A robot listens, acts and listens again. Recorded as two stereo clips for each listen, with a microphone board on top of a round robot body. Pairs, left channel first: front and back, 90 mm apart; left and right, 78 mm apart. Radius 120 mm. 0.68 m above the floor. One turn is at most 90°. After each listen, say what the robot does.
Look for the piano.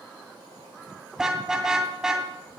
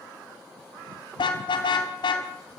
Keep listening.
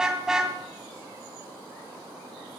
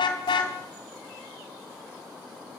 Keep listening.
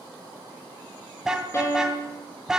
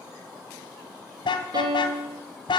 Turn 60° right.
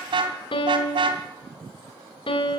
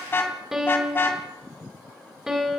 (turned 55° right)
Facing the piano.